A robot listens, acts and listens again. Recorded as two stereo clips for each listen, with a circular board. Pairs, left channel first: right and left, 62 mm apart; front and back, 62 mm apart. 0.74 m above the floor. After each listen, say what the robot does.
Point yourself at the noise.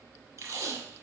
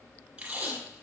Turn 110° left.
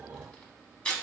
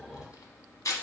Turn 20° right.
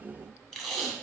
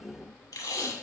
Facing the tape being pulled.